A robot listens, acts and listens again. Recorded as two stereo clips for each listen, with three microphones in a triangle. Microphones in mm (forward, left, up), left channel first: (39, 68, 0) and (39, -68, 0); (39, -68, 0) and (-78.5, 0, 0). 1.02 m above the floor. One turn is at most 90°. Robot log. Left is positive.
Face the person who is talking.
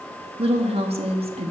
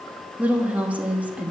note: The woman speaking: 130° right.
cmd yaw -90
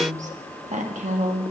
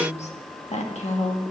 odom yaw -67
note: The woman speaking is now 65° right.
cmd yaw -65
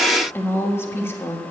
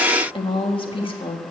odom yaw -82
note: The woman speaking is now 15° left.
cmd yaw +15
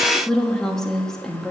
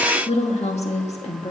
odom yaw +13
end: Found it: a woman speaking, straight ahead.